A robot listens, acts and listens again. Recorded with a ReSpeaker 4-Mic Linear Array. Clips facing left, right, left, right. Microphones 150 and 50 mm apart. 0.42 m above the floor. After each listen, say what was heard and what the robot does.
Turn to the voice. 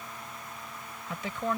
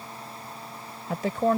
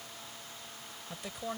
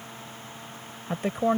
The woman speaking: about 45° right or 135° right. Turn 45° right.
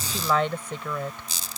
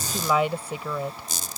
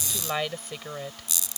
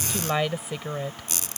So it is at 10° right. Turn 10° right.
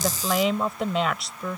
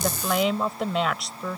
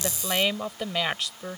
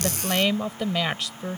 Found it: a woman speaking, straight ahead.